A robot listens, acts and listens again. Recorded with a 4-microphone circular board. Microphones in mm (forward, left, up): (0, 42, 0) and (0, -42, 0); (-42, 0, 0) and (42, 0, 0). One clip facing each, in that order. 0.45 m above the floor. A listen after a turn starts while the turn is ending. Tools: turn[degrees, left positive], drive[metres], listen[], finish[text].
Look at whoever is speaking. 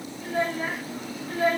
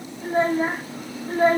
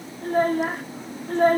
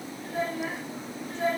Thought: The child speaking: 145° right.
Action: turn[-145]
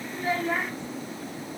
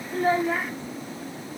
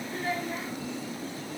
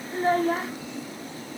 Action: finish[Facing the child speaking.]